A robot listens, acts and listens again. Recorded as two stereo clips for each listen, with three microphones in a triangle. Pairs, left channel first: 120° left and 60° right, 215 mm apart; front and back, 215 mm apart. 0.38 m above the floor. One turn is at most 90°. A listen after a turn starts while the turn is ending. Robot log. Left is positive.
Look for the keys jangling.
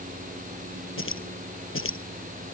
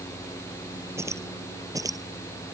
note: The keys jangling: 105° left.
cmd yaw +90
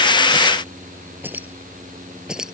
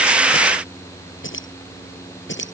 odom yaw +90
note: The keys jangling is now 25° left.
cmd yaw +25
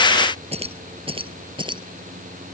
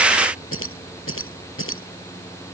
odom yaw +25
note: The keys jangling is now 10° left.
cmd yaw +10
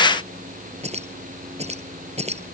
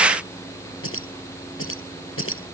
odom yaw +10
end: Facing the keys jangling.